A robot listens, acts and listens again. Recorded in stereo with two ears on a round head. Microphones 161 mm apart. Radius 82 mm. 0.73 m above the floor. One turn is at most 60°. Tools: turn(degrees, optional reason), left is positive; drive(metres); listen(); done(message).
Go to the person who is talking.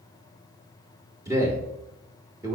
turn(degrees=-20, reason="The man speaking: about 20° right or 160° right.")
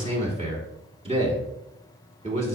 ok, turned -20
turn(degrees=-60, reason="So it is at 140° right.")
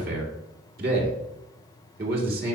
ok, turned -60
turn(degrees=-60, reason="The man speaking is now 105° right.")
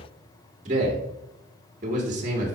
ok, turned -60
turn(degrees=-50, reason="The man speaking is now 50° right.")
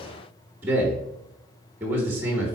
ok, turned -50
turn(degrees=-15, reason="The man speaking is now 15° right.")
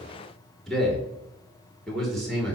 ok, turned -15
drive(metres=1.0)
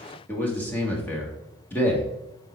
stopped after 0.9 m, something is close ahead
turn(degrees=15, reason="The man speaking is now 15° left.")
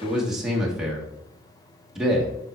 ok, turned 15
done("Arrived at the man speaking, straight ahead.")